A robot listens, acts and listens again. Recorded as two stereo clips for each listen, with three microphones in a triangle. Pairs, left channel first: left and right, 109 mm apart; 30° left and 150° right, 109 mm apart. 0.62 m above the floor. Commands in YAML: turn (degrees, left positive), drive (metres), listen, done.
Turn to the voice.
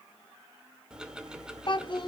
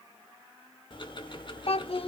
turn: 50
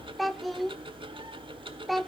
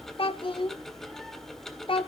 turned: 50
done: "Found it: a child speaking, straight ahead."